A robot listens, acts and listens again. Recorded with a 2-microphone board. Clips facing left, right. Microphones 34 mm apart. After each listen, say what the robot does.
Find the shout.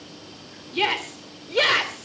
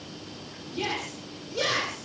Turn 60° left.
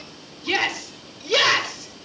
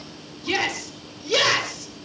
Turn 15° left.
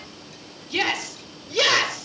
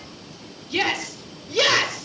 Facing the shout.